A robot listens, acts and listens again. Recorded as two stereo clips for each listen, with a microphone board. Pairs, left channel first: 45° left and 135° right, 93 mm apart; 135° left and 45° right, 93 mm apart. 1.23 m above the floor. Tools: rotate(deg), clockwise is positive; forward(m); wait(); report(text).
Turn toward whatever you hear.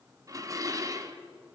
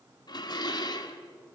rotate(-175)
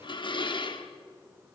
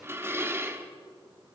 rotate(-15)
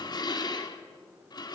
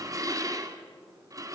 report("Facing the dishes clattering, 1 to 2 m away.")